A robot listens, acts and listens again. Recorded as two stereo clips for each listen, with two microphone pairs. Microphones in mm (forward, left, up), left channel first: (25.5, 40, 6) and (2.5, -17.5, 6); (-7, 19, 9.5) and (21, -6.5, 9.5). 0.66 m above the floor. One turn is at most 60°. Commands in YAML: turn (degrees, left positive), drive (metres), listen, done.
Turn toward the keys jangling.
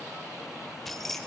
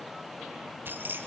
turn: -15
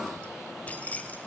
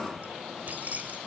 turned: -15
done: "Facing the keys jangling."